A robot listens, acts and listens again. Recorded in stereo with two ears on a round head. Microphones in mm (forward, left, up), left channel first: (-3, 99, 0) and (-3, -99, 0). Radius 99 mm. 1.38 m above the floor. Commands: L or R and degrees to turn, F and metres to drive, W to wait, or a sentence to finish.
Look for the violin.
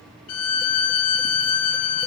L90
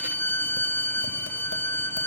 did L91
L10
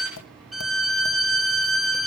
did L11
Found it: a violin, straight ahead, 1 to 2 m away.